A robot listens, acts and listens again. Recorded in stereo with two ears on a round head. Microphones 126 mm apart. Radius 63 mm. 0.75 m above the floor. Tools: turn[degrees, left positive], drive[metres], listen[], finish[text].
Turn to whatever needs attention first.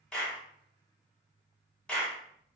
Action: listen[]
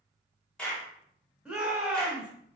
Action: turn[-30]
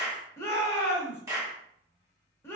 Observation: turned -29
Thought: So it is at 20° left.
Action: turn[20]
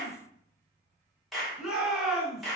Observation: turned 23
Action: finish[Facing the shout.]